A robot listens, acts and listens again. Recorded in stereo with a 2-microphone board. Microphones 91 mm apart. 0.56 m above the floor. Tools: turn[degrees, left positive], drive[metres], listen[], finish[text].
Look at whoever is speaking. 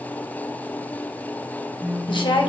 Thought: The woman speaking: about 60° left or 120° left.
Action: turn[60]
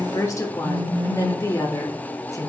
Thought: So it is at 40° left.
Action: turn[40]
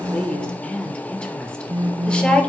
Thought: The woman speaking is now 15° left.
Action: turn[15]
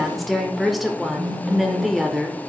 Action: finish[Found it: a woman speaking, straight ahead.]